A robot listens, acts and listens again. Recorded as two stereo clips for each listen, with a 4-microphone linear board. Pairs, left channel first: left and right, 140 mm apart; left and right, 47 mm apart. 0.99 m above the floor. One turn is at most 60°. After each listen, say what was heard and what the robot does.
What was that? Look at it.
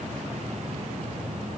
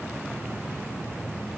Keep listening.
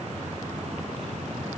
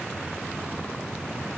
Keep listening.
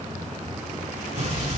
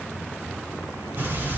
The explosion: about 55° right or 125° right. Turn 55° right.
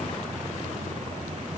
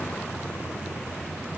Keep listening.
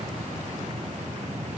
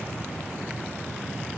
I heard an explosion, but can't make it out now. It was about straight ahead or 70° right.